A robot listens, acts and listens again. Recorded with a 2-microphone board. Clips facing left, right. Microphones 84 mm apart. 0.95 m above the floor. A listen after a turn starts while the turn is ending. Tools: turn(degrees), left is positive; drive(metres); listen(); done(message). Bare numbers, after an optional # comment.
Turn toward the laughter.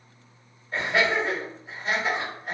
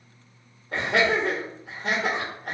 # The laughter: about 70° right or 110° right.
turn(-70)
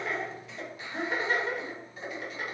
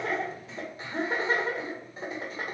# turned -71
# So it is at 35° right.
turn(-35)
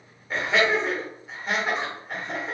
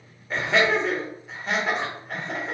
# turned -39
done("Found it: laughter, straight ahead.")